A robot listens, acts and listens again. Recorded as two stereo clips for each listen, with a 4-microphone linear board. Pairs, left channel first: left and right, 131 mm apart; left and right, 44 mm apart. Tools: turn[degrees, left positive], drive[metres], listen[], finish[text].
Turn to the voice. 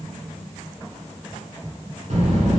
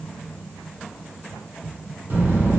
Thought: The child speaking: about 60° right or 120° right.
Action: turn[-60]
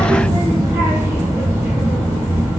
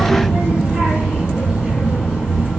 Thought: So it is at 25° right.
Action: turn[-25]
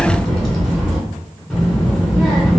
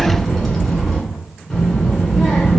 Action: finish[Facing the child speaking.]